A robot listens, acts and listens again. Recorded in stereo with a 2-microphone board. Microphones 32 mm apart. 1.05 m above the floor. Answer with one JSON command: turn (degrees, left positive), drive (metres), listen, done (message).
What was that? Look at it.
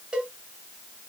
{"turn": -30}
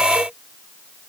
{"listen": true}
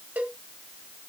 {"turn": -115}
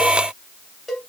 {"done": "Found it: a cowbell, straight ahead."}